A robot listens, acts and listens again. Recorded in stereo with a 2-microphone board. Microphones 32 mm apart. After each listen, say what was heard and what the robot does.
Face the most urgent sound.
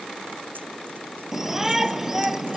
Turn 30° right.
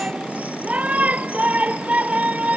So it is at 135° right. Turn 135° right.
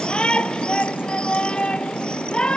The shout is now 30° left. Turn 30° left.
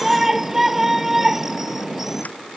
The shout is now 10° right. Turn 10° right.
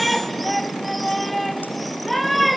Found it: a shout, straight ahead.